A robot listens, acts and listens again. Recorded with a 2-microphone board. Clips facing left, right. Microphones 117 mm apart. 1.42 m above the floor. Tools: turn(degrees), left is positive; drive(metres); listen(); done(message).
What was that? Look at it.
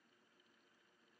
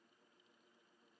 listen()
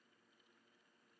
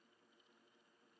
listen()
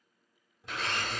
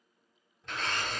turn(degrees=30)
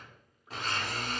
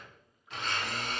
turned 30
turn(degrees=140)
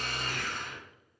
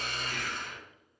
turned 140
turn(degrees=45)
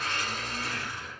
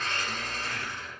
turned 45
turn(degrees=10)
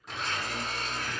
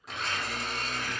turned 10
done("Found it: a blender, straight ahead.")